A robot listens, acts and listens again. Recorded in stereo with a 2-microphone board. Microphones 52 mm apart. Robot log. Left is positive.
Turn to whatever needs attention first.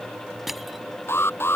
note: The alarm: about 50° left or 130° left.
cmd yaw +50
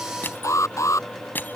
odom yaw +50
note: So it is at 80° left.
cmd yaw +80
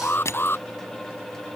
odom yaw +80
note: The alarm is now 45° left.
cmd yaw +45
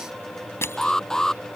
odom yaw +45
note: The alarm is now 10° left.
cmd yaw +10
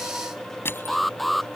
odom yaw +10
end: Found it: an alarm, straight ahead.